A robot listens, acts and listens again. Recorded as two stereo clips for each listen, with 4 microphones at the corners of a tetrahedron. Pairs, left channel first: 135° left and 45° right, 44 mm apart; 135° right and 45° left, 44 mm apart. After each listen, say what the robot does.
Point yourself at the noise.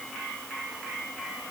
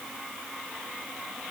Keep listening.
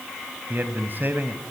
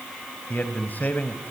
Turn 90° right.
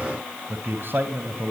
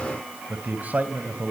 Found it: a man speaking, straight ahead.